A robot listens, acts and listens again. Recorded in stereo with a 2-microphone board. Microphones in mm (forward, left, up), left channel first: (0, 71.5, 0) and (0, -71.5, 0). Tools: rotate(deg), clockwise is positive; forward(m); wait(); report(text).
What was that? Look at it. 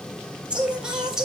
rotate(30)
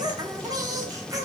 rotate(155)
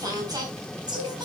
rotate(30)
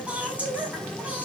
rotate(10)
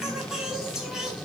report("Found it: singing, straight ahead.")